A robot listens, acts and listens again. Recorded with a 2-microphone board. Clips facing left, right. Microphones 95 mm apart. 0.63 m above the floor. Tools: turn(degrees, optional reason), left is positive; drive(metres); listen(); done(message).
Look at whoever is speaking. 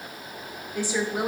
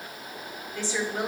turn(degrees=30)
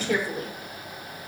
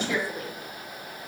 turn(degrees=135, reason="So it is at 135° left.")
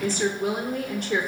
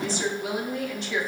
turn(degrees=55, reason="The woman speaking is now 55° left.")
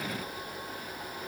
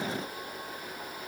listen()
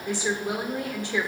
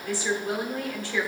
turn(degrees=20, reason="The woman speaking is now 20° left.")
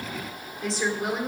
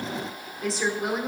done("Facing the woman speaking.")